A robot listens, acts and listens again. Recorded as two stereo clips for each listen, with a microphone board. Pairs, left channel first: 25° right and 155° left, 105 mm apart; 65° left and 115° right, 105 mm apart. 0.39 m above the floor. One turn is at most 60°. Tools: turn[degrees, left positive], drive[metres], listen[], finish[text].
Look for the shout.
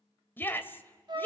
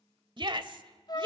Thought: The shout: 90° right.
Action: turn[-60]
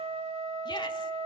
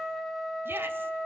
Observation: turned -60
Thought: Nothing new. It was at 30° right.
Action: turn[-30]
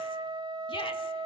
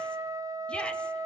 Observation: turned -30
Action: listen[]
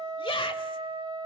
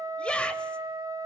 Thought: The shout is now 10° right.
Action: turn[-10]
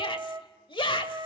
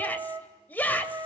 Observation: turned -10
Action: finish[Facing the shout.]